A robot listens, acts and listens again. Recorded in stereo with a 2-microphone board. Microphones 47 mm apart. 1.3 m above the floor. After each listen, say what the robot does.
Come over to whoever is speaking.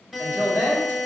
Turn 90° right.
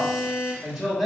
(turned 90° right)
Drive 1.0 m forward.
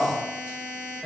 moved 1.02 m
Drive 1.0 m forward.
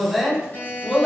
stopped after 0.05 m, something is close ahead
Arrived at the woman speaking, straight ahead.